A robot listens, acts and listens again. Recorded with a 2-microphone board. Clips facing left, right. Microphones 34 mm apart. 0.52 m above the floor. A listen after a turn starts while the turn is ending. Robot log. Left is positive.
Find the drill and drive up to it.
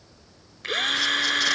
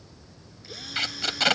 note: The drill: about 70° left or 110° left.
cmd yaw +70
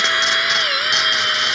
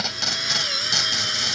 note: So it is at 45° left.
cmd yaw +45
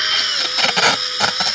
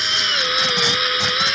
note: The drill is now 25° right.
cmd yaw -25
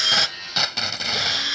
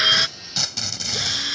note: The drill is now 15° left.
cmd yaw +15
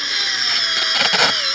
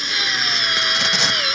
cmd fwd 1.0
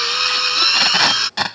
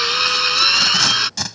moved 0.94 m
cmd fwd 1.0
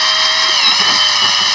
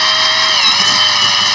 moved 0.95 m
cmd fwd 1.0
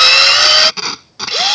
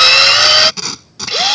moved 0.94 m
cmd fwd 1.0
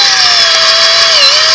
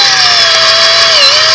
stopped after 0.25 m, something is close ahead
end: Arrived at the drill, straight ahead.